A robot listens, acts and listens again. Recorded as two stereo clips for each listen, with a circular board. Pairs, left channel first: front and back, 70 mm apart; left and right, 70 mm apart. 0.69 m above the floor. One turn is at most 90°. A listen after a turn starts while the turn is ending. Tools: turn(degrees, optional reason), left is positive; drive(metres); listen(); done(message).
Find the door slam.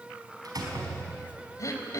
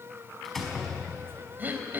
turn(degrees=90, reason="The door slam: 175° left.")
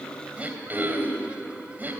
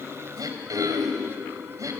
turn(degrees=85, reason="Nothing new. It was at 85° left.")
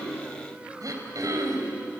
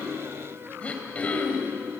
done("I heard a door slam from this way, but can't make it out now.")